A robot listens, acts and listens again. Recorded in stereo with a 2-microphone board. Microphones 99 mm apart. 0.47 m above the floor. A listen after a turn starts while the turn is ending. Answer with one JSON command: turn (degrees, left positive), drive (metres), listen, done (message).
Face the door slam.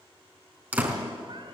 {"turn": -20}
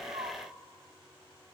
{"listen": true}
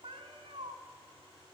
{"done": "I heard a door slam, but can't make it out now. It was about straight ahead or 140° right."}